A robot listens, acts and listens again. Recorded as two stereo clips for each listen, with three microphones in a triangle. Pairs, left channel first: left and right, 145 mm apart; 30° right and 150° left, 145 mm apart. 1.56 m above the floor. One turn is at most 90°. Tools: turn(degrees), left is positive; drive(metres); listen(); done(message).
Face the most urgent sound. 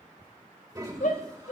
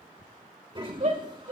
turn(degrees=90)
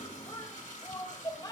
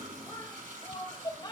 turn(degrees=30)
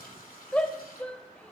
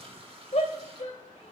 turn(degrees=10)
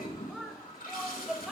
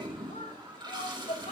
done("Facing the shout, 2 to 4 m away.")